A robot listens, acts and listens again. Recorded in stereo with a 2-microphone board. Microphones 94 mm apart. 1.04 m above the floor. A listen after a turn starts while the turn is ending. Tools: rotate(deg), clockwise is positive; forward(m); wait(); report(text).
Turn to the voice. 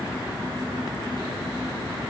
wait()
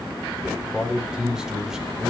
rotate(30)
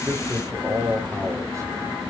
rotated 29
rotate(145)
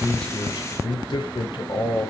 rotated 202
rotate(-55)
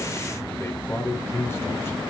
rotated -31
rotate(-25)
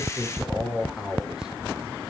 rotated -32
report("Facing the man speaking, over 4 m away.")